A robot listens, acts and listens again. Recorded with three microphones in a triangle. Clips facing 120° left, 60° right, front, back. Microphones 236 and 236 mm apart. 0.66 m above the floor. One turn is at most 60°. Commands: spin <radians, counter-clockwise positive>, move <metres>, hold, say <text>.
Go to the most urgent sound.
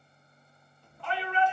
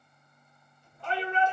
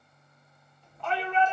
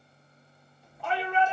spin -1.05
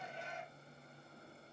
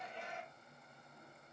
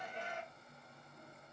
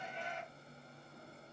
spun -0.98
spin -0.79
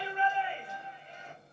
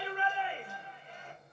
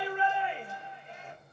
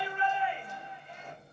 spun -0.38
spin -0.44
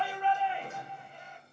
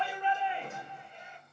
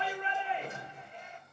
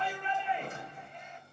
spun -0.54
spin 0.17
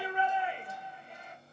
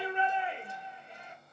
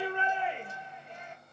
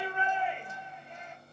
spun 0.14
move 1.0
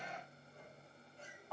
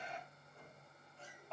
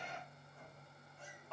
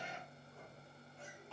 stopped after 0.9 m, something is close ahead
say I am next to the shout.